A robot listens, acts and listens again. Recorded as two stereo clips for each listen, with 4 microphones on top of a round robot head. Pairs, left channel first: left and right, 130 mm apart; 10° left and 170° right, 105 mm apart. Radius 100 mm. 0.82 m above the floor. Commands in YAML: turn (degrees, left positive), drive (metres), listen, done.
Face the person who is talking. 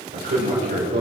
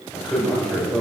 turn: -80
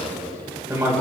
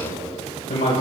turn: -20
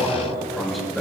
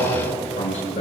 done: "Found it: a man speaking, straight ahead."